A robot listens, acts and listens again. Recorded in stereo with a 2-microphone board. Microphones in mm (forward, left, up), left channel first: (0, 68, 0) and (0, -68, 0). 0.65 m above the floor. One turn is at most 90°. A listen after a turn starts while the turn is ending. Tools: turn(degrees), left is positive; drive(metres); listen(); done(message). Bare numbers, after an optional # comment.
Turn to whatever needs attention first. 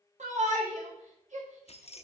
# The shout: about 65° right or 115° right.
turn(-65)
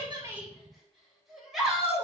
done("Facing the shout.")